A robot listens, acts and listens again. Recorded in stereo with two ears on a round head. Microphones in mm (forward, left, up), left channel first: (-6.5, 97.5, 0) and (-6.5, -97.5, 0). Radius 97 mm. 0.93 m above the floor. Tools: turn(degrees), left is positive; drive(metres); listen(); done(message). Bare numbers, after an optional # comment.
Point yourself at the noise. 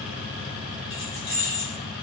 # The keys jangling: about 25° left or 155° left.
turn(25)
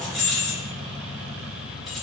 done("Facing the keys jangling.")